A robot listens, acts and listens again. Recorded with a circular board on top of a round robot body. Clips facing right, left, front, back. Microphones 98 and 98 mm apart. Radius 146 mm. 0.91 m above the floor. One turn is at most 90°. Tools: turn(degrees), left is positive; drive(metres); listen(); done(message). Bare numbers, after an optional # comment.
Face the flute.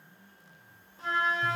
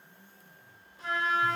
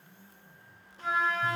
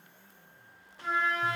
# The flute: 30° right.
turn(-30)
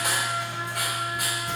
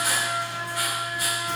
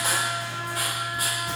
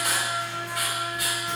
listen()
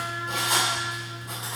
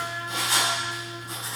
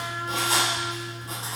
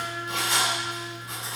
listen()
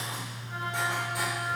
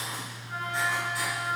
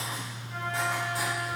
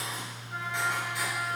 done("I heard a flute from this way, but can't make it out now.")